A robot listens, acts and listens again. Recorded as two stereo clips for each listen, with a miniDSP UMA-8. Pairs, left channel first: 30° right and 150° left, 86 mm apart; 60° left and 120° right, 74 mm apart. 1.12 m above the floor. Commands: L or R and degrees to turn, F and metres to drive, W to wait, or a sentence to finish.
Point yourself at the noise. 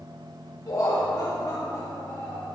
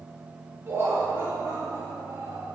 R80
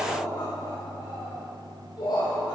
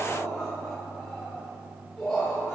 R25
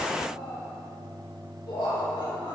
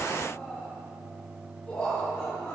R15
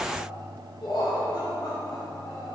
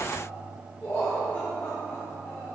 Facing the laughter.